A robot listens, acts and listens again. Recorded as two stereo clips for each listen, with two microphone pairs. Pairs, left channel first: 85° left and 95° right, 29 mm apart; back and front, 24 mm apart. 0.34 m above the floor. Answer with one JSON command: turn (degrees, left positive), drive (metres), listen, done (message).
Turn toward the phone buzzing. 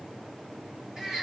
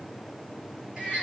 {"listen": true}
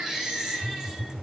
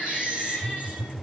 {"turn": -85}
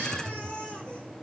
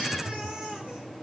{"turn": -20}
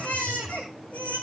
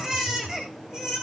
{"done": "Facing the phone buzzing, 2 to 4 m away."}